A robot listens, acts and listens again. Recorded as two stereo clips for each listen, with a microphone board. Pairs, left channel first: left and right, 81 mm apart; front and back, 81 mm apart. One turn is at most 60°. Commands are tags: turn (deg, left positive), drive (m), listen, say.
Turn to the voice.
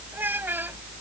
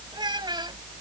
<turn deg="-60"/>
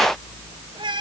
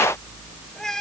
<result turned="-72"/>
<turn deg="-60"/>
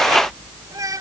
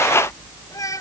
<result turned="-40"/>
<turn deg="-45"/>
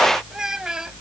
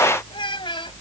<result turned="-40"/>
<say>Facing the child speaking.</say>